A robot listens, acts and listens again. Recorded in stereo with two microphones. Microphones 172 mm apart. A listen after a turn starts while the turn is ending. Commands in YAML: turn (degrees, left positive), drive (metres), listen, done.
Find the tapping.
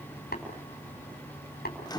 turn: 70
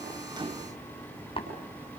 turn: 35
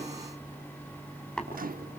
done: "Found it: tapping, straight ahead, over 4 m away."